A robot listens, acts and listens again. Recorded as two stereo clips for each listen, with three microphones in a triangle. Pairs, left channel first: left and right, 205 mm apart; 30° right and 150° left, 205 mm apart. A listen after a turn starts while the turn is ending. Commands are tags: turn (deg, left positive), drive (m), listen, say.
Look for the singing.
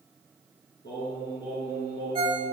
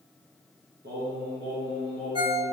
<turn deg="125"/>
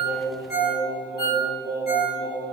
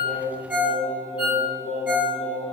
<turn deg="-15"/>
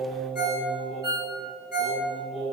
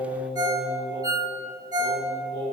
<say>Found it: singing, straight ahead.</say>